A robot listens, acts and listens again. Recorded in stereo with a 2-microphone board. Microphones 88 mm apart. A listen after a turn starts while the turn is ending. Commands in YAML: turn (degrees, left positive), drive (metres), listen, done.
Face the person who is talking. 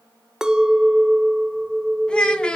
turn: 30
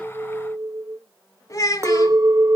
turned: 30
turn: 140
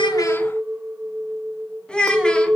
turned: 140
turn: 10
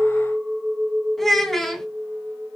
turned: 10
done: "Facing the child speaking."